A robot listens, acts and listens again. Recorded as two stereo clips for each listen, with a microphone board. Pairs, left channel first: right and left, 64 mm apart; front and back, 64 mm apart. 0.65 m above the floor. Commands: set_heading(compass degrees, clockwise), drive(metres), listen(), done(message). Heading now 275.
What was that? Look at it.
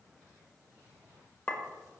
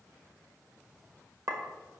set_heading(55)
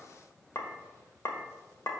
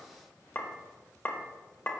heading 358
set_heading(58)
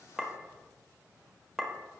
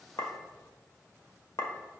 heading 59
done("Facing the clink.")